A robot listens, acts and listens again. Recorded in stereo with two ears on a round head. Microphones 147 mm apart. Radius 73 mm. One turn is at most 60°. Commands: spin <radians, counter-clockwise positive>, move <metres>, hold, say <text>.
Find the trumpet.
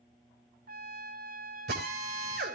spin -0.96
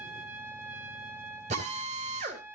spin -0.26
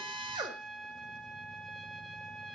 say Found it: a trumpet, straight ahead, 1 to 2 m away.